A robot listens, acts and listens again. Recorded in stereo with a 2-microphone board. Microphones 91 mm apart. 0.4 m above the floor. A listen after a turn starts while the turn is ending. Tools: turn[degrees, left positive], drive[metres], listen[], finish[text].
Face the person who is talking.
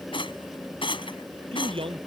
Action: turn[-90]
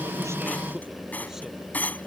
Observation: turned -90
Action: listen[]
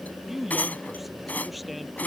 Action: finish[Found it: a man speaking, straight ahead.]